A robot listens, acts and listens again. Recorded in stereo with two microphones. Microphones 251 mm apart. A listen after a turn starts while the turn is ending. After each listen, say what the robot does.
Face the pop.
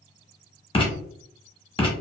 Keep listening.
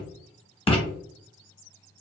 Keep listening.
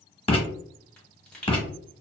Turn 30° left.
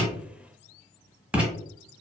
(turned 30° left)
Keep listening.
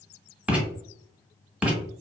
I heard a pop, but can't make it out now. It was about 25° right or 145° left.